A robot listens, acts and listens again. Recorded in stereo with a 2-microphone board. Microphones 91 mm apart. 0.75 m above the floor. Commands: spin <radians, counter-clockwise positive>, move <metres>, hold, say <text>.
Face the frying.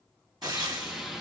spin -0.79
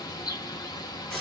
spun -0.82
say Facing the frying, 1 to 2 m away.